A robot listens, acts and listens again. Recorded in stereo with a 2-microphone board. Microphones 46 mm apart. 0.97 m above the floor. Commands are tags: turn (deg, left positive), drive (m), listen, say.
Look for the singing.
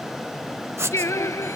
<turn deg="90"/>
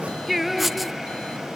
<say>Found it: singing, straight ahead.</say>